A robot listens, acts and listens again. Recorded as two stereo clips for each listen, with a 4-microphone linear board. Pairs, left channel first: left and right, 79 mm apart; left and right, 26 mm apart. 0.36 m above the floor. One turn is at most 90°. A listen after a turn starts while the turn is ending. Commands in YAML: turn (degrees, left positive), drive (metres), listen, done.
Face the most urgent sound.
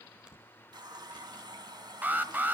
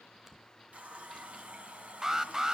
turn: -25
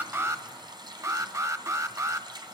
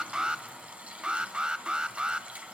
turn: -90
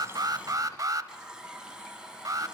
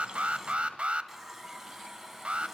turn: -60
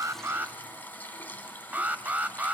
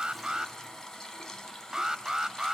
turn: -25
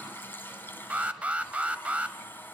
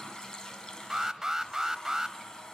turn: -20
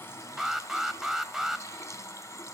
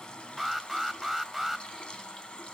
done: "Found it: an alarm, straight ahead."